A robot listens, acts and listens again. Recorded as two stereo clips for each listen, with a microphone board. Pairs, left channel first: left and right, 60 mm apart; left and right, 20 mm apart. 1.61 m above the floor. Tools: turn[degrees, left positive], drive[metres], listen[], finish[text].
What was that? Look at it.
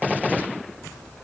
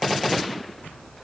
Action: listen[]
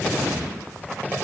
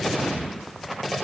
Action: listen[]
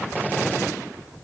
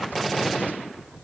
Action: finish[I can't make out anything to turn to.]